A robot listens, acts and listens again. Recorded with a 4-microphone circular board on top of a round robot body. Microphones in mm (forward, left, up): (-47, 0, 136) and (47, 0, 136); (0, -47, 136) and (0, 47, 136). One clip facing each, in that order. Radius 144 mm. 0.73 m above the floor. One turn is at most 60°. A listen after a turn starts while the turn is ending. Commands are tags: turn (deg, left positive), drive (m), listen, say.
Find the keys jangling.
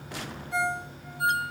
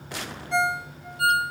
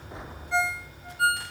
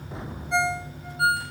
<listen/>
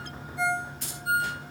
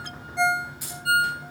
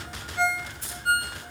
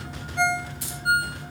<turn deg="60"/>
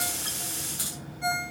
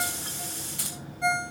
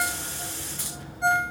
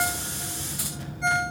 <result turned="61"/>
<turn deg="10"/>
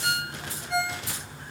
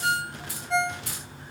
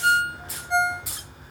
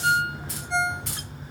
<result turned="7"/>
<say>Found it: keys jangling, straight ahead, over 4 m away.</say>